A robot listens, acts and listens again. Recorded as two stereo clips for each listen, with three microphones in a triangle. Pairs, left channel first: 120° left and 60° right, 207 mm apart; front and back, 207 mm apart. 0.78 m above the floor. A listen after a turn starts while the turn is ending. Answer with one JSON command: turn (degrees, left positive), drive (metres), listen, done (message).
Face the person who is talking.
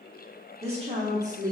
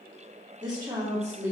{"turn": -100}
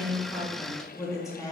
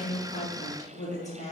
{"turn": 50}
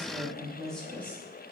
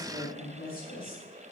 {"turn": 40}
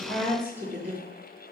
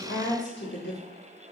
{"turn": 25}
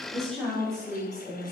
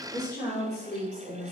{"turn": 30}
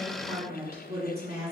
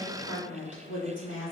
{"done": "Facing the woman speaking."}